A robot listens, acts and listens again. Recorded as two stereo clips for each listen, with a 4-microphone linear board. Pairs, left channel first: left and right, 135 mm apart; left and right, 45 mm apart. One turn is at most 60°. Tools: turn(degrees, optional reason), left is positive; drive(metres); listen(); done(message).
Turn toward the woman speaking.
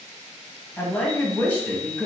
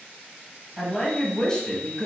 turn(degrees=30)
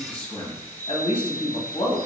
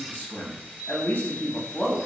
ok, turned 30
turn(degrees=60, reason="So it is at 135° left.")
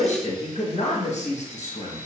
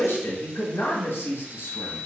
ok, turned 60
turn(degrees=60, reason="The woman speaking is now 75° left.")
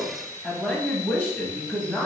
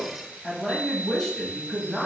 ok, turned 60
turn(degrees=15, reason="The woman speaking is now 15° left.")
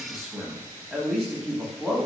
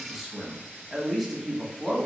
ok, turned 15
done("Facing the woman speaking, under 1 m away.")